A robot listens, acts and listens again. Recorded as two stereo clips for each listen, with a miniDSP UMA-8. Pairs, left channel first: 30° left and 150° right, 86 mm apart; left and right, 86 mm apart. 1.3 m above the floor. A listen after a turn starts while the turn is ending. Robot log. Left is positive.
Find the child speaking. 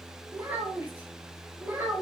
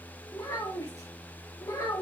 note: The child speaking: 140° left.
cmd yaw +140
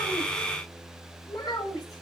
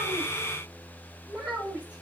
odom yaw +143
note: The child speaking is now 15° right.
cmd yaw -15
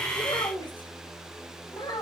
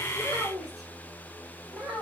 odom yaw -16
end: Found it: a child speaking, straight ahead.